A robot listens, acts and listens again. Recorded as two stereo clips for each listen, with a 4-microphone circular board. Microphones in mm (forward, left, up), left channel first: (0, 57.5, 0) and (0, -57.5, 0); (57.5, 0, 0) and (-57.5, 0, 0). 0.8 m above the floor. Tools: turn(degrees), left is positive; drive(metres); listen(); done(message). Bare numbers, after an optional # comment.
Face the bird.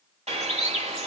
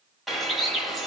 # The bird: 90° right.
turn(-90)
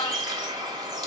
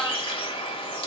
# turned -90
# The bird is now 40° right.
turn(-40)
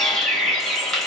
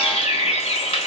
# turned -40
done("Facing the bird.")